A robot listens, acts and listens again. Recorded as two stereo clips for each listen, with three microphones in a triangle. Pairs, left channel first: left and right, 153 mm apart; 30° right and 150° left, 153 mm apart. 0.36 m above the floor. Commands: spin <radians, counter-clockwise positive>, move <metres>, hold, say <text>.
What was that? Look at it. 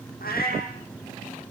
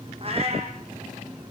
spin 1.75
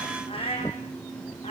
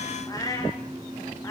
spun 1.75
spin 0.70
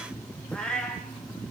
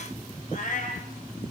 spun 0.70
say Found it: a cat meowing, straight ahead, over 4 m away.